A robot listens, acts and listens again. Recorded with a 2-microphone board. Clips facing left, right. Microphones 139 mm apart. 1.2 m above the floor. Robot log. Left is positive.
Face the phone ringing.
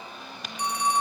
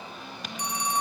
note: The phone ringing: about 65° left or 115° left.
cmd yaw +65
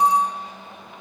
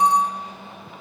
end: Facing the phone ringing, under 1 m away.